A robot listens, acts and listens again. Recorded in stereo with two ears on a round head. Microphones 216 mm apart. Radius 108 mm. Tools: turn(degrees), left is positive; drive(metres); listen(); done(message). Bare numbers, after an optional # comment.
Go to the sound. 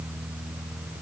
listen()
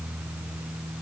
listen()
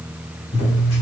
# The scissors: about 55° left or 125° left.
turn(55)
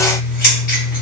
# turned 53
# So it is at 45° left.
turn(45)
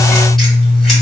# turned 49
drive(1.0)
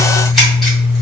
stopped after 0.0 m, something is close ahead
done("Blocked. The scissors is further on, straight ahead.")